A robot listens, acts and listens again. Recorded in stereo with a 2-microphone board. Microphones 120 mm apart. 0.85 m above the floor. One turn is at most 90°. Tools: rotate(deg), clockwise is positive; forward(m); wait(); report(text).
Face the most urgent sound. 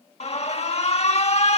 rotate(-60)
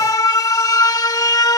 rotate(-35)
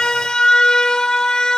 rotate(-10)
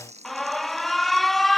report("Found it: an alarm, straight ahead.")